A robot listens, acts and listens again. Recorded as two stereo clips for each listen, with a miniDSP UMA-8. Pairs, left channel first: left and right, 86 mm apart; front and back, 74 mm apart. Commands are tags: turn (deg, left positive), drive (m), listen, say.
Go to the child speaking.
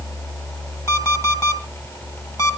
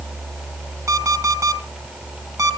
<listen/>
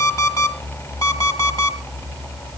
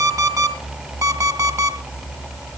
<listen/>
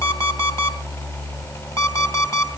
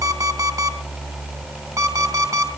<say>I can't make out a child speaking to turn to.</say>